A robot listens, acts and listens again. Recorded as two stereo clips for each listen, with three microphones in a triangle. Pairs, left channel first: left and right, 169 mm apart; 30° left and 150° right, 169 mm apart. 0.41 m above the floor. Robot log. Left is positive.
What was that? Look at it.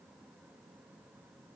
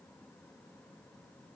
cmd idle
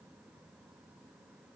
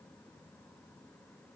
cmd idle
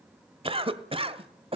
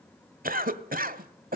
note: The cough: 140° right.
cmd yaw -140
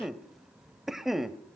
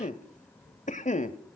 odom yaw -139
end: Found it: a cough, straight ahead, 1 to 2 m away.